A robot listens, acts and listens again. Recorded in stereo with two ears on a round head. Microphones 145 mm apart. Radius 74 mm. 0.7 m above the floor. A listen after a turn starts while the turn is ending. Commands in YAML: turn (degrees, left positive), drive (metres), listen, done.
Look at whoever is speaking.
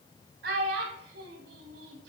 turn: -90
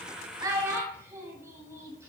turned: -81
turn: -15
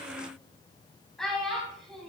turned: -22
done: "Facing the child speaking."